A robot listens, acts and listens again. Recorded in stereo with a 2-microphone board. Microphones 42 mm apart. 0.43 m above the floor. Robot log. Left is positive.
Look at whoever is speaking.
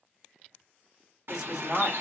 cmd yaw -30
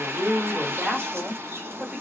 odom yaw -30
note: So it is at 140° right.
cmd yaw -140
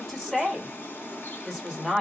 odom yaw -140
end: Facing the woman speaking, 1 to 2 m away.